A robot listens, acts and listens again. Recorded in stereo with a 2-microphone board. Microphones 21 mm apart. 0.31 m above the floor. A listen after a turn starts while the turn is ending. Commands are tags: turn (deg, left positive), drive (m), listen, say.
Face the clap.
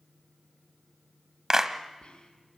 <turn deg="-25"/>
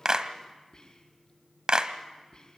<turn deg="-125"/>
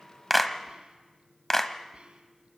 <turn deg="20"/>
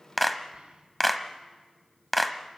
<say>Found it: a clap, straight ahead.</say>